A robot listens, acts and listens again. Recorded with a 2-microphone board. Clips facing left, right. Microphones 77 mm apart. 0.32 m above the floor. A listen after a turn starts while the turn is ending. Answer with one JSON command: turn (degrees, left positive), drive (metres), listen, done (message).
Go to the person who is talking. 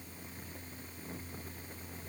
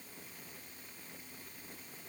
{"listen": true}
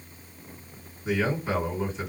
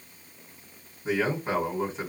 {"turn": -35}
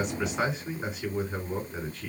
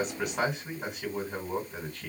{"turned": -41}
{"turn": -100}
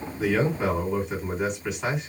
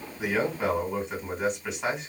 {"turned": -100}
{"drive": 1.0}
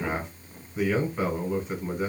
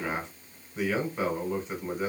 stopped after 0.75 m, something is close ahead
{"done": "Arrived at the man speaking, straight ahead."}